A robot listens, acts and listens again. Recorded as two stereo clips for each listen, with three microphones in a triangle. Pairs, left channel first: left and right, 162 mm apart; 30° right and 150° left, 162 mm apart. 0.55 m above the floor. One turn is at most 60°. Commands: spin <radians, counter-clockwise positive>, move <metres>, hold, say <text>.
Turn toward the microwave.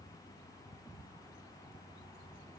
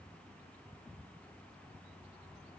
hold
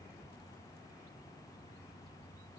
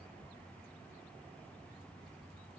hold
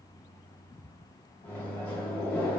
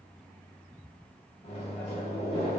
spin 0.17
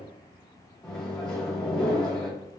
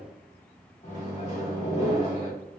say Found it: a microwave, straight ahead.